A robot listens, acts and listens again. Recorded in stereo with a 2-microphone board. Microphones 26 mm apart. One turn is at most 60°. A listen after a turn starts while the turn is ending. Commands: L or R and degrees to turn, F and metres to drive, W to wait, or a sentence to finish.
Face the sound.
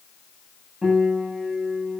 R20
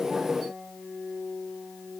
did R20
R60
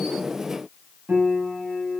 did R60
R60
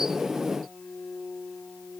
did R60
R25
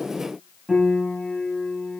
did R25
R10
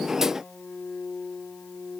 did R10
Facing the piano.